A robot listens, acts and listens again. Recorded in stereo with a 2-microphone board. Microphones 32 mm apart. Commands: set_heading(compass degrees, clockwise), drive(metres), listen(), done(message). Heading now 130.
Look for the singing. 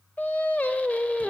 set_heading(75)
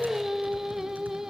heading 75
set_heading(90)
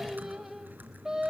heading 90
set_heading(105)
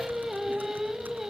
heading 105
done("Facing the singing, 2 to 4 m away.")